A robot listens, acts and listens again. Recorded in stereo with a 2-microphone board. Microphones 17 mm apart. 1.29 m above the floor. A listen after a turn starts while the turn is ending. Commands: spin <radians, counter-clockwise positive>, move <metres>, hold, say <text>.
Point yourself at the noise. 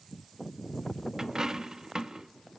spin -0.70
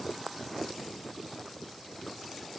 hold
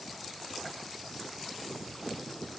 say I heard a dropped coin, but can't make it out now. It was about straight ahead or 100° right.